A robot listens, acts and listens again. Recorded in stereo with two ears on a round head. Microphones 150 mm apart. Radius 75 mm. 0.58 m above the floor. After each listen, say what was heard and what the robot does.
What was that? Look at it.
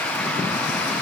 Keep listening.
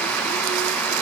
Keep listening.
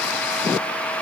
I can't make out anything to turn to.